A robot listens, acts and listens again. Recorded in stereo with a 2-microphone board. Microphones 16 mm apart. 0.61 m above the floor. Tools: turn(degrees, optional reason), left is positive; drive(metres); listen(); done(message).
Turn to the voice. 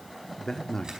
turn(degrees=40, reason="The man speaking: about 40° left or 140° left.")
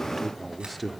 done("Facing the man speaking, 1 to 2 m away.")